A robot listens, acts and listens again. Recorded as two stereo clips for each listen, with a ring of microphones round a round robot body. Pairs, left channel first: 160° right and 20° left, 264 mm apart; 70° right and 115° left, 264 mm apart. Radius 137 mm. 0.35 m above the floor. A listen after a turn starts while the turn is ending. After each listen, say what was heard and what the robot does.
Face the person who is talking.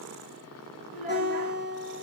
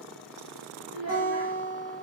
The child speaking: 115° left. Turn 115° left.
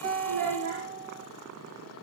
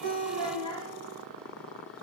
Found it: a child speaking, straight ahead, over 4 m away.